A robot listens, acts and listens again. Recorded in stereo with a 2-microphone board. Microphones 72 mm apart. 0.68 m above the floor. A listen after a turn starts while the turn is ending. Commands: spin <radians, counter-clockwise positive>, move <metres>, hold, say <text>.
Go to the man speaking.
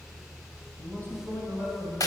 spin 0.52
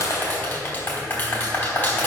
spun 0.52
hold
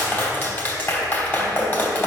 hold
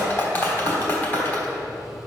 say I heard a man speaking, but can't make it out now. It was about straight ahead or 120° left. I did not reach it.